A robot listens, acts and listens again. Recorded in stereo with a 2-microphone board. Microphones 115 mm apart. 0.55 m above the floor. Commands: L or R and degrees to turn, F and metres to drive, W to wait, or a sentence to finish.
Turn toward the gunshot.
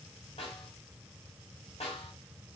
W
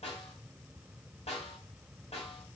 W
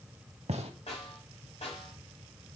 R70
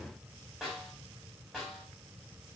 W
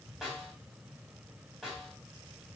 I heard a gunshot, but can't make it out now. It was about straight ahead or 40° right.